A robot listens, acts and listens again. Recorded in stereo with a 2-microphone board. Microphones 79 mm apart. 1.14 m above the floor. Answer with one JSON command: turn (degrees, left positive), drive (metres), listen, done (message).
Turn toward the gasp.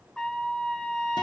{"listen": true}
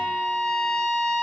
{"listen": true}
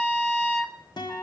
{"done": "I can't make out a gasp, only a trumpet and a guitar."}